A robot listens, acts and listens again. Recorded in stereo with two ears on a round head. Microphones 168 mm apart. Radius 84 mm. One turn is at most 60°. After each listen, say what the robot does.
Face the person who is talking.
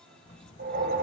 Turn 40° left.
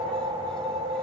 Keep listening.
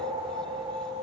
Keep listening.
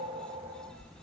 Found it: a child speaking, straight ahead, 1 to 2 m away.